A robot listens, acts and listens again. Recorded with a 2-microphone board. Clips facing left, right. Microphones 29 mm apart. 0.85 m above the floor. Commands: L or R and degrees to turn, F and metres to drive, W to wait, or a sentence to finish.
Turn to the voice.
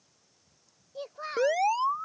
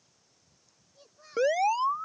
L90
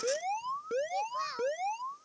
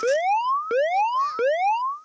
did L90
W
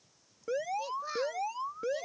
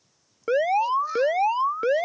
W
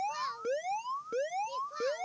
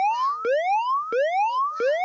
I heard a child speaking from this way, but can't make it out now.